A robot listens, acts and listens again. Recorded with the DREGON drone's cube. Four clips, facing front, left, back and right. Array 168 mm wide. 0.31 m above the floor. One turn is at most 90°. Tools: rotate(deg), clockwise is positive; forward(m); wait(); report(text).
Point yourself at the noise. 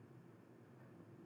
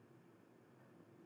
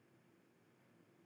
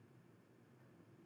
wait()
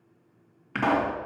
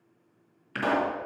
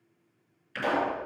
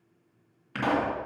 report("Found it: a pop, straight ahead, 2 to 4 m away.")